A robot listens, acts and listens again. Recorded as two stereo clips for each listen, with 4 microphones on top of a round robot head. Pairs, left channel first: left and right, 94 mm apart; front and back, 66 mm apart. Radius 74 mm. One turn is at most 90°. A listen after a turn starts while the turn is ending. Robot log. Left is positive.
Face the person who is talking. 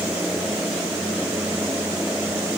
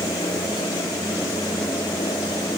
cmd idle
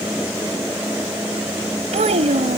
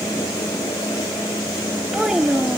note: The child speaking: 95° right.
cmd yaw -90
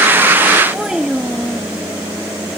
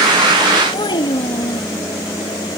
end: Facing the child speaking.